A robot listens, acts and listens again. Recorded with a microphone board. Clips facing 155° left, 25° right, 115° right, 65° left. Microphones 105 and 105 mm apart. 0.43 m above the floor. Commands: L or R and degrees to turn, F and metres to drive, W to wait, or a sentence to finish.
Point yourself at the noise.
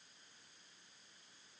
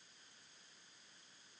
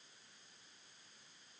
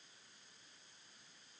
W
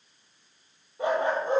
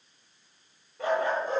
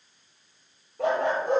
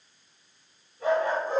R140
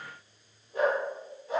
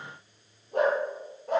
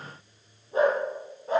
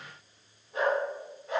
R55
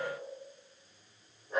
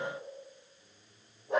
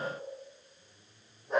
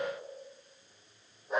R20
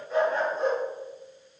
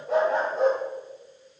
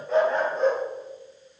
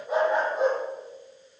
R10
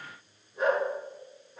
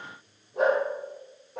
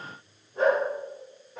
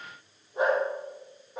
Found it: a dog barking, straight ahead, over 4 m away.